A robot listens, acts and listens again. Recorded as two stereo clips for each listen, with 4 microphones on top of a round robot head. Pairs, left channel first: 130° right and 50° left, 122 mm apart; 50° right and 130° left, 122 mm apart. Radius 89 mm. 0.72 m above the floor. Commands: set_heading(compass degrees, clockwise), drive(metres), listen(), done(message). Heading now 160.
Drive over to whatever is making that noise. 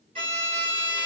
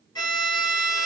set_heading(150)
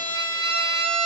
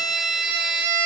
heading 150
drive(1.0)
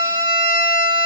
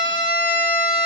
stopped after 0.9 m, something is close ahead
done("Arrived at the violin, straight ahead.")